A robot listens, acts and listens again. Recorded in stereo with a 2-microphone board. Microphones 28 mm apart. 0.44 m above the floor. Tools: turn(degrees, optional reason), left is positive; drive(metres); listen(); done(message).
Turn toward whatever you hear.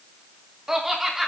turn(degrees=-30)
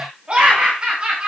turn(degrees=-145, reason="So it is at 145° right.")
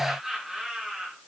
turn(degrees=-20, reason="The laughter is now 20° right.")
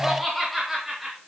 turn(degrees=-10, reason="The laughter is now 10° right.")
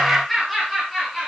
done("Facing the laughter, over 4 m away.")